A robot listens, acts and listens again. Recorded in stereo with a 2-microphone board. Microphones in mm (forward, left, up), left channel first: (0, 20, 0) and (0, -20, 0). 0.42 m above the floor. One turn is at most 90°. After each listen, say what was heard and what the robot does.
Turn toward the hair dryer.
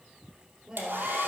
The hair dryer: about 60° right or 120° right. Turn 60° right.
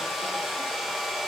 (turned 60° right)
Found it: a hair dryer, straight ahead.